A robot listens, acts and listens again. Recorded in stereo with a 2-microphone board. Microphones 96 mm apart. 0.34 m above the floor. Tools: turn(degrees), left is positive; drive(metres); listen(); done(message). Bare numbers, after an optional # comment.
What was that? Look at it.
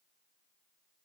listen()
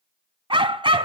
# The dog barking: about 65° right or 115° right.
turn(-65)
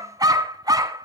# So it is at 45° right.
turn(-45)
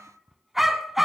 done("Facing the dog barking, 1 to 2 m away.")